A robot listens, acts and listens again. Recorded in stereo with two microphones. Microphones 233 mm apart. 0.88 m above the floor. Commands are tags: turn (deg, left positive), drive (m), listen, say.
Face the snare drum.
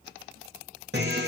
<listen/>
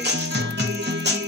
<listen/>
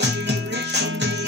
<say>I can't make out a snare drum, only a guitar.</say>